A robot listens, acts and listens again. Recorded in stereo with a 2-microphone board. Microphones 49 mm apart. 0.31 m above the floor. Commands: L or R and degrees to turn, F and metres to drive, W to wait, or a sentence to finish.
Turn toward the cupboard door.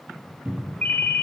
R30
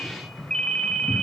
Found it: a cupboard door, straight ahead, 1 to 2 m away.